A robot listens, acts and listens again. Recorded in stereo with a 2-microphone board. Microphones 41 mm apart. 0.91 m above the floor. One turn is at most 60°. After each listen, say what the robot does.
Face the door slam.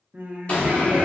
Turn 30° left.
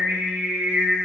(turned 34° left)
Keep listening.
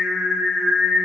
I heard a door slam, but can't make it out now. It was about straight ahead or 115° left.